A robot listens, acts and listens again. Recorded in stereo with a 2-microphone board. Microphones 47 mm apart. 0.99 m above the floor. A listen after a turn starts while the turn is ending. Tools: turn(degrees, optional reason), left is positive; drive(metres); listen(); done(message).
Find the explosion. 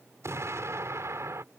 turn(degrees=-90)
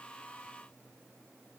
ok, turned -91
done("Facing where the explosion came from. I can't hear it now.")